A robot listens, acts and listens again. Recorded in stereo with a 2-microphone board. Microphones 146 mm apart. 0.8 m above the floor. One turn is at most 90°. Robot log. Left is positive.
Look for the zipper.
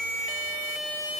cmd idle
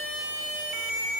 cmd idle
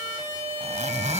note: The zipper: about 50° right or 130° right.
cmd yaw -50
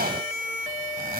note: So it is at 80° right.
cmd yaw -80
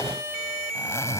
note: The zipper is now 20° left.
cmd yaw +20
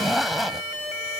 end: Facing the zipper.